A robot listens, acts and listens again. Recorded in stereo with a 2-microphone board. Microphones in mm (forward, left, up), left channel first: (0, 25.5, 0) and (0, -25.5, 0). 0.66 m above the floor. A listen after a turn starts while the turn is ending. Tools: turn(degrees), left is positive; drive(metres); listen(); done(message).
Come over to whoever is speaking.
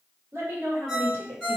turn(degrees=-60)
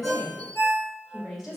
drive(metres=1.0)
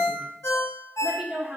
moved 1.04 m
turn(degrees=-15)
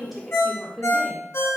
drive(metres=1.0)
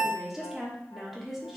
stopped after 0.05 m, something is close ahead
done("Arrived at the woman speaking, straight ahead.")